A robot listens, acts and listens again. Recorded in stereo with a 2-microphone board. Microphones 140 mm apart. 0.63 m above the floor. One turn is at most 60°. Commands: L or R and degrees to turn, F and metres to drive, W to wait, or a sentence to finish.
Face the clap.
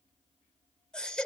W
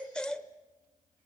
W
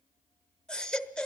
I can't make out a clap to turn to.